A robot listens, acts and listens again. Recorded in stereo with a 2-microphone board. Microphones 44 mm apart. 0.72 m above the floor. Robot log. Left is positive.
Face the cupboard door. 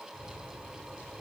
cmd idle
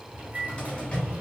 note: The cupboard door: about 30° left or 150° left.
cmd yaw +30
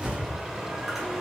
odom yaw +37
end: Facing the cupboard door, 1 to 2 m away.